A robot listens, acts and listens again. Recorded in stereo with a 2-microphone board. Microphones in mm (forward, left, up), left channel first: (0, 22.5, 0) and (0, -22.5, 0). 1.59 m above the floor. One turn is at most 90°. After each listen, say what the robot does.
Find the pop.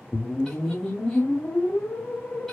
Keep listening.
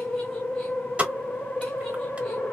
Turn 30° right.
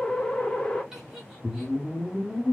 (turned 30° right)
Keep listening.
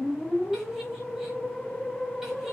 I heard a pop, but can't make it out now. It was about straight ahead or 120° right.